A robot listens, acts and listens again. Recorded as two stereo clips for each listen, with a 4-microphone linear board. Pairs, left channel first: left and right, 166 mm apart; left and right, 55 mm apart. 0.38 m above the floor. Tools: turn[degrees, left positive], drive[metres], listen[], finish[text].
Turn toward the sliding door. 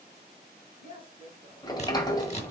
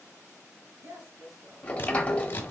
Thought: The sliding door: about 25° left or 155° left.
Action: turn[25]
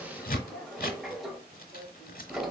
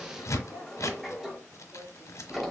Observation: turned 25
Action: finish[Found it: a sliding door, straight ahead.]